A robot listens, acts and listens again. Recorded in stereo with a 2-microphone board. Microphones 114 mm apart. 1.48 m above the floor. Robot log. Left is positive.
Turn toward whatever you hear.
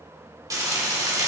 note: The frying: about 30° right or 150° right.
cmd yaw -30
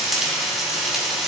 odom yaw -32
end: Found it: frying, straight ahead, 1 to 2 m away.